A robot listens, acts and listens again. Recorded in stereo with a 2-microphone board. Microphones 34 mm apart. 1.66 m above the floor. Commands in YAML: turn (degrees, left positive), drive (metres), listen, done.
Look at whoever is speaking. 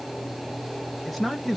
turn: 30
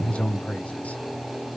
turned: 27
turn: 130
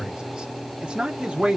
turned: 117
turn: -35
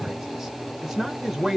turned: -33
done: "Facing the man speaking."